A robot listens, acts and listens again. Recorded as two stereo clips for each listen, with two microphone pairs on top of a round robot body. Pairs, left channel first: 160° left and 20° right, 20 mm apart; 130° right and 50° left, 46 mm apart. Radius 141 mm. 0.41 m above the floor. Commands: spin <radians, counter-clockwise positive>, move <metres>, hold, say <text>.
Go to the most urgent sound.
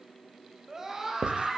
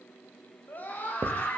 spin -1.48
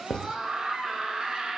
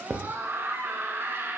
spin 0.35
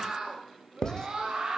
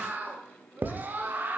spin 0.17
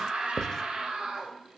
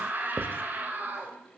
move 1.0
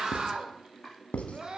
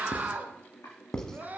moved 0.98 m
move 1.0
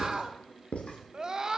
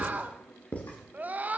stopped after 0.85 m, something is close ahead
spin 0.17
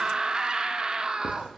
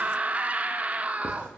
say Arrived at the scream, straight ahead.